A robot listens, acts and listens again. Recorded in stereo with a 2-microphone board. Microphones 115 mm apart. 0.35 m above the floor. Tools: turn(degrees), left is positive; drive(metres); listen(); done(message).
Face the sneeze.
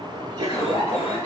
turn(degrees=-35)
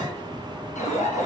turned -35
listen()
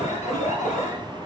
done("I heard a sneeze, but can't make it out now. It was about straight ahead or 110° right.")